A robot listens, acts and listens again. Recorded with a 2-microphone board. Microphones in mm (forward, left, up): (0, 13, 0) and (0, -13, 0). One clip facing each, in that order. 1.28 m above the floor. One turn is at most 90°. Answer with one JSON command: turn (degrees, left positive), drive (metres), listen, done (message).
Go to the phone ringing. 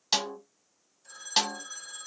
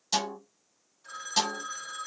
{"turn": -60}
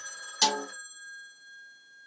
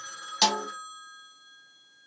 {"turn": -60}
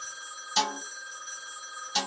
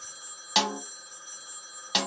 {"turn": 25}
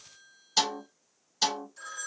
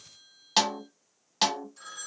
{"drive": 1.0}
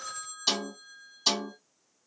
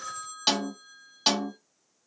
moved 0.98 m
{"turn": -10}
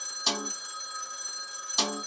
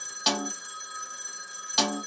{"drive": 1.0}
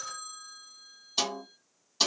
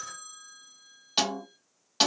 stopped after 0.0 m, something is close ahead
{"done": "I am next to the phone ringing."}